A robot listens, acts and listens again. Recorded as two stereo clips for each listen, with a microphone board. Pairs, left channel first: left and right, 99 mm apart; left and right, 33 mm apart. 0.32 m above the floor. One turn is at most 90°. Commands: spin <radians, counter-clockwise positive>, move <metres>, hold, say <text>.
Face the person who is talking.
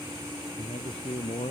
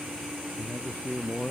spin 1.57
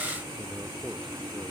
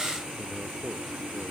hold
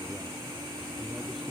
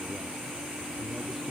hold
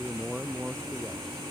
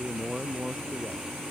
say Found it: a man speaking, straight ahead.